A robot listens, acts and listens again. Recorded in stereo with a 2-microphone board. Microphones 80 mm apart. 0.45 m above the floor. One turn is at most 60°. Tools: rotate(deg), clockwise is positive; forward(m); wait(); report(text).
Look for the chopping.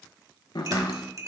rotate(-60)
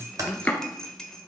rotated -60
rotate(-20)
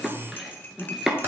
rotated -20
report("Facing the chopping, 1 to 2 m away.")